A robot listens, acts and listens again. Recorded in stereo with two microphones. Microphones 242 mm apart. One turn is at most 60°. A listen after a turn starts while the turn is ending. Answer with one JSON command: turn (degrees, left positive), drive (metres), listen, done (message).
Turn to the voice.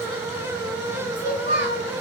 {"turn": 45}
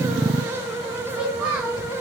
{"done": "Found it: a child speaking, straight ahead."}